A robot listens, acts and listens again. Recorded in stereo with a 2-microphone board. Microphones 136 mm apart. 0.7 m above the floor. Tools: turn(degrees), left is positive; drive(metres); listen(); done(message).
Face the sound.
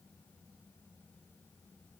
listen()
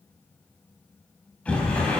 turn(degrees=30)
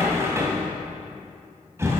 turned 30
turn(degrees=-20)
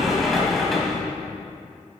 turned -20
done("Facing the sliding door.")